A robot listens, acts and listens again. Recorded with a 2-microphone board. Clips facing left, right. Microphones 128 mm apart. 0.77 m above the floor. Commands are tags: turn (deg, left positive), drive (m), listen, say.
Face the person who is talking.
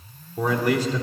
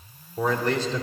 <turn deg="30"/>
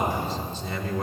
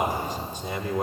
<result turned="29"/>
<turn deg="-15"/>
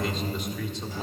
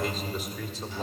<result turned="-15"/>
<say>Facing the man speaking, 1 to 2 m away.</say>